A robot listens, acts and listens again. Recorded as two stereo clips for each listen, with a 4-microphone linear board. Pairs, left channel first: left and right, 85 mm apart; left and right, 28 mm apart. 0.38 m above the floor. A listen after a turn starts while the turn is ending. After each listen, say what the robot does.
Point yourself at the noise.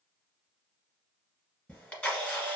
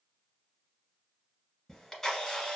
Turn 20° left.
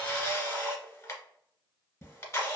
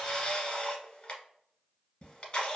Turn 140° left.
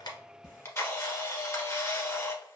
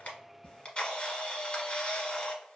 Turn 35° left.
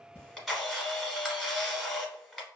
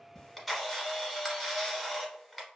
Found it: a camera shutter, straight ahead.